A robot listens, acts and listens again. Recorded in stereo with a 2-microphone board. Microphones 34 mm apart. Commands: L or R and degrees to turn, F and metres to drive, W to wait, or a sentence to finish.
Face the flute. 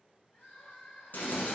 W
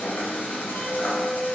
R45
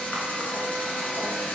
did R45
W
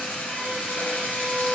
R15
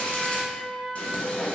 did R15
Facing the flute, 1 to 2 m away.